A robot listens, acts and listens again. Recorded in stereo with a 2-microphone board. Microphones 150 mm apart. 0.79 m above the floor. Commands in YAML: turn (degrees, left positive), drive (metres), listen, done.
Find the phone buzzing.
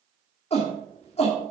listen: true
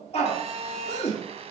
turn: -45
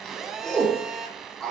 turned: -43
done: "Facing the phone buzzing."